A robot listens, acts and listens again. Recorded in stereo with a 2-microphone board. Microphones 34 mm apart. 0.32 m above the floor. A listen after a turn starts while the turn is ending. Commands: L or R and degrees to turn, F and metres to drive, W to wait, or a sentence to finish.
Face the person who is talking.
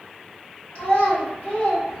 L45
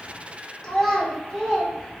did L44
L10
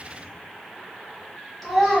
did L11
Facing the child speaking, 1 to 2 m away.